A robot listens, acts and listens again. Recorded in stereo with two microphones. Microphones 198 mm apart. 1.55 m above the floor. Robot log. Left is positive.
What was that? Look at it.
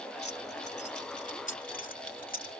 note: The keys jangling: about 45° left or 135° left.
cmd yaw +45
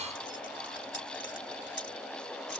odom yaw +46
cmd idle
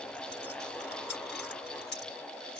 note: So it is at 65° left.
cmd yaw +65
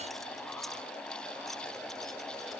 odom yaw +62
cmd idle
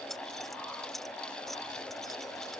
end: Found it: keys jangling, straight ahead.